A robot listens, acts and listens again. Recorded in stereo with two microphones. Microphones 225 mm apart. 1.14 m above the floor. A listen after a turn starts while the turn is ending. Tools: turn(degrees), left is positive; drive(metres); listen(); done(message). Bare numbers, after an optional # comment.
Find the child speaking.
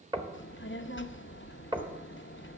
# The child speaking: about 60° left or 120° left.
turn(60)
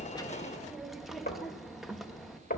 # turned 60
done("Found it: a child speaking, straight ahead.")